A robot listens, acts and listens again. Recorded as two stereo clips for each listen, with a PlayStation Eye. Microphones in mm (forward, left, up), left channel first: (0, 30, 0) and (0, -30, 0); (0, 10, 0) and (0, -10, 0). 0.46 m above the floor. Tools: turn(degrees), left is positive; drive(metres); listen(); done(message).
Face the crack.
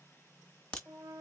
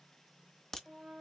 turn(degrees=15)
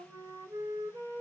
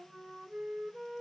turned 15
listen()
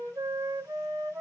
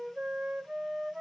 done("I heard a crack, but can't make it out now. It was about straight ahead or 150° left.")